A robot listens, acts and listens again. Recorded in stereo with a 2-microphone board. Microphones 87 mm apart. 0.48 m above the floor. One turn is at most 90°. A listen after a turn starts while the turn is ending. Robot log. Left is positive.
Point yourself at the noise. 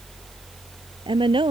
note: The woman speaking: about 70° right or 110° right.
cmd yaw -70
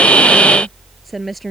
end: Facing the woman speaking.